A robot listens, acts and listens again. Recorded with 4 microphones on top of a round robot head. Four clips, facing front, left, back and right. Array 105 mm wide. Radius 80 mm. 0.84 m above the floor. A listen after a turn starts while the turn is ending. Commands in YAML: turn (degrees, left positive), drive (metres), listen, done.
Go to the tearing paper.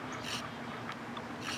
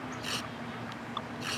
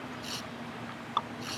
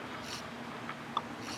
turn: 95
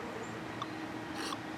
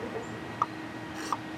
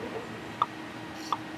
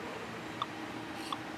turn: 50
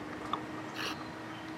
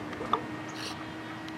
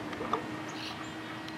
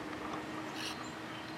turn: 15
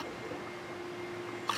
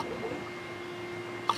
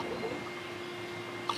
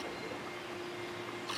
drive: 1.0
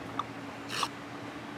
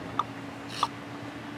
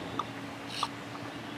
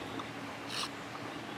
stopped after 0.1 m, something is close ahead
done: "Something is in my way. I am facing the tearing paper but have not reached it."